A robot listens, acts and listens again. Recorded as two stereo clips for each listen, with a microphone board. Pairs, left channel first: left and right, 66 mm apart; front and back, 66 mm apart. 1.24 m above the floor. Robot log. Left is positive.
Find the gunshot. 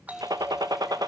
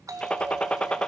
note: The gunshot: 75° right.
cmd yaw -75
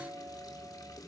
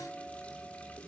end: I heard a gunshot from this way, but can't make it out now.